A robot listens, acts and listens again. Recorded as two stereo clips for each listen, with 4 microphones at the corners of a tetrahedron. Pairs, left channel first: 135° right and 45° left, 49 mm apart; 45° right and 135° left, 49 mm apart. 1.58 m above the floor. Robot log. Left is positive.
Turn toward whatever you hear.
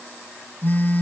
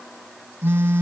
note: The phone buzzing: 175° left.
cmd yaw +175
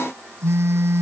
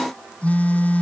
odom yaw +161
note: The phone buzzing is now 15° left.
cmd yaw +15
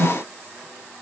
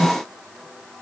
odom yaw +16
end: Found it: a phone buzzing, straight ahead.